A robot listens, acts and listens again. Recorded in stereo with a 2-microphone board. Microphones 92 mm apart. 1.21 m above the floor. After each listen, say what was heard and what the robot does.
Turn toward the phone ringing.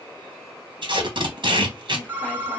The phone ringing: about 20° right or 160° right. Turn 20° right.
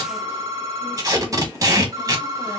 So it is at 140° right. Turn 140° right.
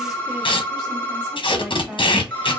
The phone ringing is now 15° left. Turn 15° left.
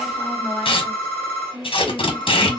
The phone ringing is now 10° left. Turn 10° left.
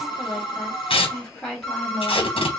Found it: a phone ringing, straight ahead.